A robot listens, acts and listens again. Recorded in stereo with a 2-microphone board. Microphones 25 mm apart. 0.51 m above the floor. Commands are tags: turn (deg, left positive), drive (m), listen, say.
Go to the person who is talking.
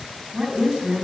<turn deg="-35"/>
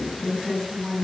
<drive m="1.0"/>
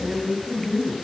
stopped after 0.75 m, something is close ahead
<say>Blocked. The woman speaking is further on, straight ahead.</say>